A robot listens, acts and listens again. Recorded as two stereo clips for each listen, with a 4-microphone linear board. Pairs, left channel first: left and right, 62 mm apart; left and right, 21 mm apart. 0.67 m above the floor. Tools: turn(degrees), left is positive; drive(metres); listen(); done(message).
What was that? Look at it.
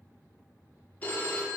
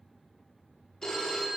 turn(degrees=25)
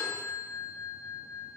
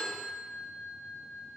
done("Facing the phone ringing.")